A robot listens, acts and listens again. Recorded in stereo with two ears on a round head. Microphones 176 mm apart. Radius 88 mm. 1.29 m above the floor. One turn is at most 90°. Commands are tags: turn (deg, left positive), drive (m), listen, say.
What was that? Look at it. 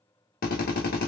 <turn deg="50"/>
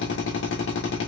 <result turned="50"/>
<turn deg="80"/>
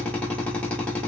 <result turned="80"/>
<say>Found it: a drill, straight ahead, 1 to 2 m away.</say>